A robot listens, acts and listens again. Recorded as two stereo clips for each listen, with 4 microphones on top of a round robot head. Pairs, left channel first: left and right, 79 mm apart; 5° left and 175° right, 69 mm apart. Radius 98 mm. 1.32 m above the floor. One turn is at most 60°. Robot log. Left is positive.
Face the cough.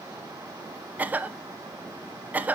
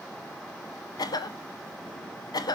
note: The cough: 20° right.
cmd yaw -20
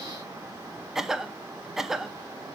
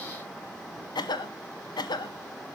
end: Found it: a cough, straight ahead.